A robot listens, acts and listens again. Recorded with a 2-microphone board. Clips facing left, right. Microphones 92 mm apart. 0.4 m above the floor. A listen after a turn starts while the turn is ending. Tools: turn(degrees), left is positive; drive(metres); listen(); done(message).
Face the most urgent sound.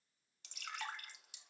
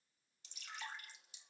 listen()
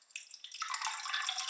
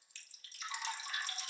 listen()
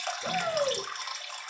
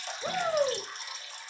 turn(degrees=-30)
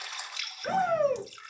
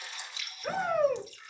done("Facing the shout.")